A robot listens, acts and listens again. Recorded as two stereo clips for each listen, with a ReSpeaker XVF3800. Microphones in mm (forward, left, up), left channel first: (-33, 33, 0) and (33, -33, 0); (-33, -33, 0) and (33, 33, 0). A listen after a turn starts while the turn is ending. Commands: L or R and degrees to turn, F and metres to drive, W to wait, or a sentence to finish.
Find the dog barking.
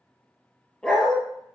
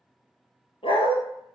R140
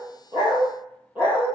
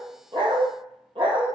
L30
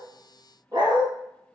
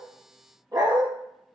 Facing the dog barking.